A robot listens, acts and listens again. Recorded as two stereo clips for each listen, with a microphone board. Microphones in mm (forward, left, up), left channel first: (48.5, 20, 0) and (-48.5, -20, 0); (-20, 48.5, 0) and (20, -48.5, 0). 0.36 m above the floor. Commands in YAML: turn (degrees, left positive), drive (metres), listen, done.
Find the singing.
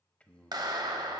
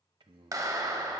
turn: -55
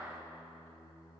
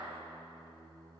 turn: -25
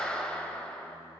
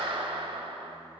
listen: true
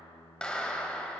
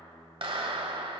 done: "Found it: singing, straight ahead."